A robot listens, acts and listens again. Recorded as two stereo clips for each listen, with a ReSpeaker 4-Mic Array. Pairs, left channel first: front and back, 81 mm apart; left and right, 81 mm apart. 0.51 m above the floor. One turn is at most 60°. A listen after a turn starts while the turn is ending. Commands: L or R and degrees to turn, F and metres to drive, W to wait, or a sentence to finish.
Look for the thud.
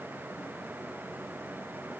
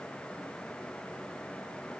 W
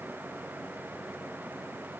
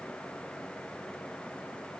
W
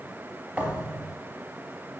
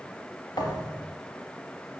L60
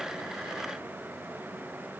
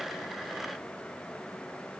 L55
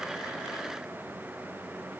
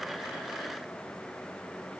I heard a thud from this way, but can't make it out now.